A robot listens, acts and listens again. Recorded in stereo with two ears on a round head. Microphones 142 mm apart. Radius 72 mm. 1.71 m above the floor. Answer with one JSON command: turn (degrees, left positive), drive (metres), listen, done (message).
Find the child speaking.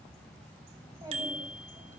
{"turn": -20}
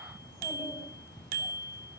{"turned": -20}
{"listen": true}
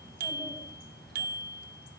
{"listen": true}
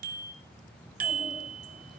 {"done": "I heard a child speaking, but can't make it out now. It was about straight ahead or 140° right."}